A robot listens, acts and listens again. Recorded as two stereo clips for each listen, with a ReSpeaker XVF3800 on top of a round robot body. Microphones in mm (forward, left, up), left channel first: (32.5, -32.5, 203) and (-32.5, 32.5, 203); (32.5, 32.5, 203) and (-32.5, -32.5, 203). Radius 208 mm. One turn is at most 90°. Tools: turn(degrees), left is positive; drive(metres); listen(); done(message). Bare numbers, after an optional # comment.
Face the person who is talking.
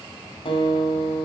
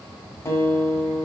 listen()
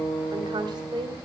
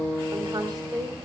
# The woman speaking: 175° left.
turn(90)
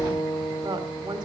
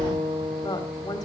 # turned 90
# The woman speaking is now 95° left.
turn(90)
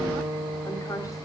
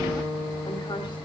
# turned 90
# The woman speaking is now 10° left.
turn(10)
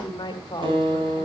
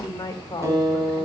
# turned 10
done("Facing the woman speaking.")